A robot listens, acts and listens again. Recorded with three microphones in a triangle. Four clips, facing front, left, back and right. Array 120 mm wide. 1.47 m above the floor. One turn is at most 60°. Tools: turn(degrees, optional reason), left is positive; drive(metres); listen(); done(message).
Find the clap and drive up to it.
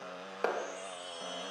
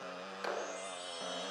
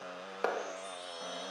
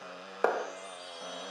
turn(degrees=-60, reason="The clap: 90° right.")
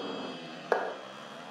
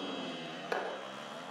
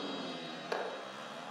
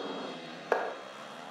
turn(degrees=-35, reason="The clap is now 35° right.")
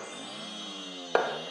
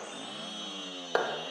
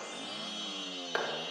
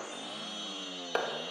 turn(degrees=10, reason="The clap is now 10° left.")
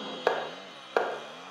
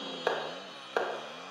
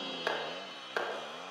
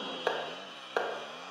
drive(metres=1.0)
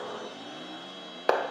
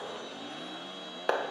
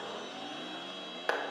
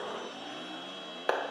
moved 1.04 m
drive(metres=1.0)
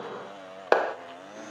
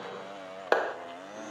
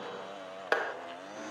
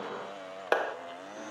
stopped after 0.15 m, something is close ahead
done("Arrived at the clap, straight ahead.")